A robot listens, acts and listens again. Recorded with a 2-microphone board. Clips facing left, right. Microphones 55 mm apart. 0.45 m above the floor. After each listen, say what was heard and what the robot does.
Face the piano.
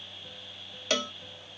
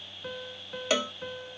The piano: about 65° right or 115° right. Turn 65° right.
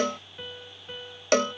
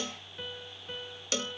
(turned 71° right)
Facing the piano.